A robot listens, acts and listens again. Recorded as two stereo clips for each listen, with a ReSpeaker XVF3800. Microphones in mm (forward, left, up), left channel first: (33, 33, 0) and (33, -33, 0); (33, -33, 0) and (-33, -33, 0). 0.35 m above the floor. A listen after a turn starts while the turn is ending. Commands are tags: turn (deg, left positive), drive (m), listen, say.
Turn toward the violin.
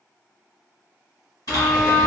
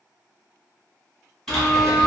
<say>Found it: a violin, straight ahead, under 1 m away.</say>